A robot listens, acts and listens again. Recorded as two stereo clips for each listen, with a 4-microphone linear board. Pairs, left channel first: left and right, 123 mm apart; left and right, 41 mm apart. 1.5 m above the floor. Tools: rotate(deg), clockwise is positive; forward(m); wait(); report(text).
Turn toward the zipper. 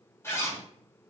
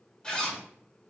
rotate(-20)
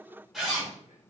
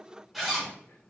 report("Facing the zipper, 1 to 2 m away.")